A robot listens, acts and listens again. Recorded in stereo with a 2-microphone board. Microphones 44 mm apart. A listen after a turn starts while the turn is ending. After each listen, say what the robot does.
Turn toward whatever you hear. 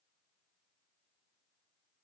Keep listening.
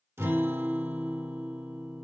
Turn 75° right.
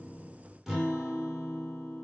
Facing the guitar.